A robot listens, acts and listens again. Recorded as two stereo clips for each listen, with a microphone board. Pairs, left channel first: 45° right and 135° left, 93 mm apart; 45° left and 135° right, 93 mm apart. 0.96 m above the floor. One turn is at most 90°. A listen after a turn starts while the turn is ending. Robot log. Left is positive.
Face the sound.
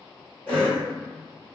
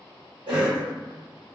note: The cough: 115° right.
cmd yaw -90
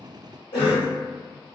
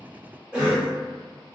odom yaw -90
note: The cough is now 55° right.
cmd yaw -55
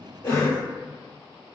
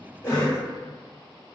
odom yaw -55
note: The cough is now 10° left.
cmd yaw +10
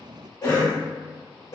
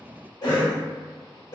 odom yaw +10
end: Facing the cough, 1 to 2 m away.